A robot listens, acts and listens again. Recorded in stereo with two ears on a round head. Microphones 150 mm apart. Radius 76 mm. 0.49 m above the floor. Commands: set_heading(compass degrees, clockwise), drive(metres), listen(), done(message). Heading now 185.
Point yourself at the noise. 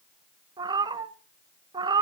set_heading(210)
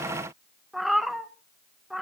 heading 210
done("Facing the cat meowing.")